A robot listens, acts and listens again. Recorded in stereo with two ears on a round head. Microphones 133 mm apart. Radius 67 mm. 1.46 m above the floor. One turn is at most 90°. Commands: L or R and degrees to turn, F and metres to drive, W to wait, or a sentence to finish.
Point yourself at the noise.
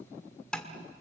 L30
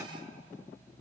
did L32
W
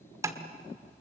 R25
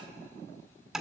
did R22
Facing the tapping.